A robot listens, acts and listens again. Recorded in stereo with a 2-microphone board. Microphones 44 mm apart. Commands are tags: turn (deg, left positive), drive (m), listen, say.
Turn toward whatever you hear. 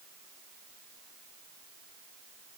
<listen/>
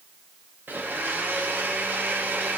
<turn deg="-45"/>
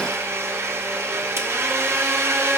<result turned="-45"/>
<turn deg="-85"/>
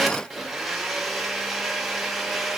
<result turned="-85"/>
<say>Facing the blender.</say>